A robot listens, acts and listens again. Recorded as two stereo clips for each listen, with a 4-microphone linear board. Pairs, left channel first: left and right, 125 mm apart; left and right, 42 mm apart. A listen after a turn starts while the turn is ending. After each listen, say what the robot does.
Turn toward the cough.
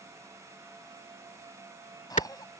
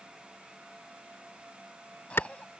Turn 30° left.
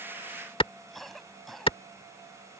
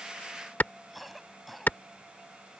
Facing the cough.